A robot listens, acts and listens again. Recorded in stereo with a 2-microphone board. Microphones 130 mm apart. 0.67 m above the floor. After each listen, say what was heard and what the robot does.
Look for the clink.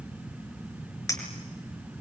The clink: about 25° left or 155° left. Turn 25° left.
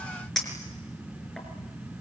Facing the clink, over 4 m away.